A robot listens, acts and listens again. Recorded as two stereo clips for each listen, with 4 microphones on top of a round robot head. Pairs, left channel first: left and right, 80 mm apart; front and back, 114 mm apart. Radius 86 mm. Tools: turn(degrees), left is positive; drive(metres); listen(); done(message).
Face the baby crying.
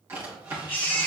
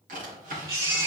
turn(degrees=130)
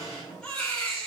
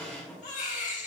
turn(degrees=15)
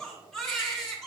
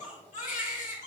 turn(degrees=10)
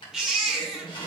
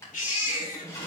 done("Found it: a baby crying, straight ahead, 2 to 4 m away.")